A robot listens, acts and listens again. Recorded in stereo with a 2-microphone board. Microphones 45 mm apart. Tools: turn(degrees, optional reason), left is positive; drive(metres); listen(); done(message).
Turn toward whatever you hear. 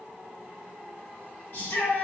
turn(degrees=70, reason="The shout: about 70° left or 110° left.")
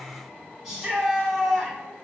done("Facing the shout, 1 to 2 m away.")